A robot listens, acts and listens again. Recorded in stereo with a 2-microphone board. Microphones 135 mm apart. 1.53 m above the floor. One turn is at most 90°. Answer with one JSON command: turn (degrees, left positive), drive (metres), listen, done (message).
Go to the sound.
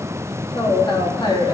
{"turn": 35}
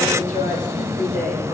{"turn": 90}
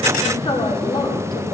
{"turn": 35}
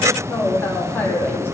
{"turn": 15}
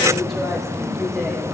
{"listen": true}
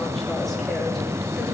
{"listen": true}
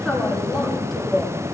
{"drive": 1.0}
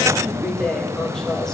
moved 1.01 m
{"drive": 1.0}
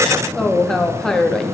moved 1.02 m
{"drive": 1.0}
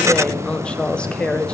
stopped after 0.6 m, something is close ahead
{"done": "I am next to the woman speaking."}